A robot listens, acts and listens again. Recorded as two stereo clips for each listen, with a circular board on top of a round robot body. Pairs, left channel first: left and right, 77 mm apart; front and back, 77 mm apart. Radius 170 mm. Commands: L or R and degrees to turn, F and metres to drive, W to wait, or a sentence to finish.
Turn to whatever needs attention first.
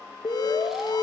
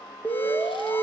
L65
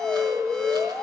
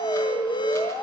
L10
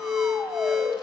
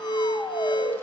Found it: an alarm, straight ahead, 1 to 2 m away.